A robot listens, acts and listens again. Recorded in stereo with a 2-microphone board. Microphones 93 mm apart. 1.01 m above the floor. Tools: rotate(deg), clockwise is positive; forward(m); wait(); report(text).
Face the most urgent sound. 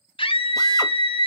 rotate(-75)
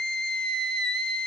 report("Facing the scream, under 1 m away.")